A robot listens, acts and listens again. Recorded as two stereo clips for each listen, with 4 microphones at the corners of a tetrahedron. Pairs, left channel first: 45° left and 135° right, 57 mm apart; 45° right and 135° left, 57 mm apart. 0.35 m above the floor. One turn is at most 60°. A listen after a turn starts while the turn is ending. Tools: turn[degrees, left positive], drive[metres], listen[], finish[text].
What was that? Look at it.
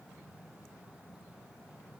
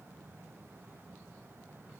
Action: listen[]
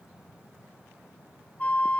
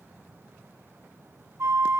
Thought: The flute: 110° left.
Action: turn[60]
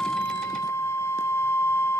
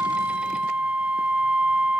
Thought: The flute is now 70° left.
Action: turn[60]
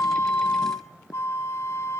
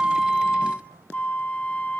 Thought: The flute is now 15° left.
Action: turn[15]
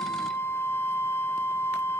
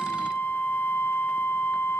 Action: finish[Found it: a flute, straight ahead.]